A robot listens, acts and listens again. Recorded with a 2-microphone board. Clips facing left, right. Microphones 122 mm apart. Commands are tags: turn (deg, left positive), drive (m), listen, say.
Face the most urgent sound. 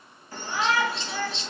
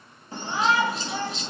<turn deg="-25"/>
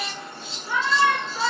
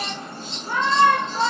<turn deg="-130"/>
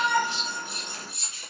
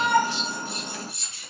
<turn deg="-50"/>
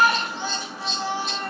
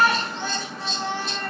<turn deg="10"/>
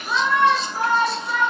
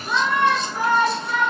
<say>Facing the shout, 1 to 2 m away.</say>